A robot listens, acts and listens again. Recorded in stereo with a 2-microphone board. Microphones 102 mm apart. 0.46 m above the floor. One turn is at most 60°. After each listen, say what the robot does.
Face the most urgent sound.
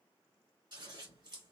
Keep listening.
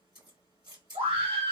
Turn 60° right.
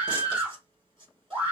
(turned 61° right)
Turn 15° right.
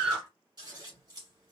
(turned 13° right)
Found it: a scream, straight ahead, 1 to 2 m away.